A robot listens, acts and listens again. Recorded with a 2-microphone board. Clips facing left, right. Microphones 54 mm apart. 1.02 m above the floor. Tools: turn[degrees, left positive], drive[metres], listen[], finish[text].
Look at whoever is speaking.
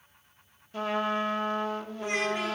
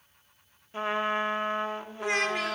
Action: turn[-90]
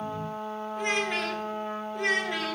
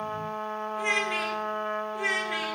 Action: finish[Found it: a child speaking, straight ahead, 1 to 2 m away.]